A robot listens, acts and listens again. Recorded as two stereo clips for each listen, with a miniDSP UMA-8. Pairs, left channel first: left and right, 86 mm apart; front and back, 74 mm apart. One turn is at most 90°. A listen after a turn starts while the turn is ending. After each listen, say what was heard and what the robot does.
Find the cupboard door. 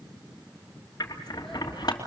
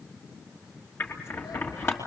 Keep listening.
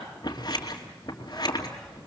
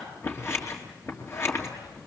Keep listening.
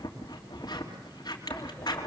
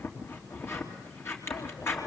I can't make out a cupboard door to turn to.